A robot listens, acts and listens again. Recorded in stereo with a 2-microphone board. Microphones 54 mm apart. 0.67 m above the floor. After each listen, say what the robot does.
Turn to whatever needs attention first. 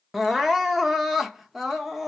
Turn 30° right.
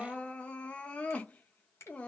Turn 25° left.
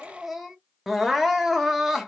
Facing the crying.